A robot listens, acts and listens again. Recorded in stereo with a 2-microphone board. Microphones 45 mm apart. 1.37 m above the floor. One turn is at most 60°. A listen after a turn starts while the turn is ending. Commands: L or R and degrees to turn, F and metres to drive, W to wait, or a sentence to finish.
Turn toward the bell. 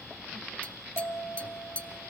L60
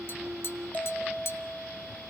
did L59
L40
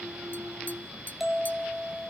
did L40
Found it: a bell, straight ahead, 2 to 4 m away.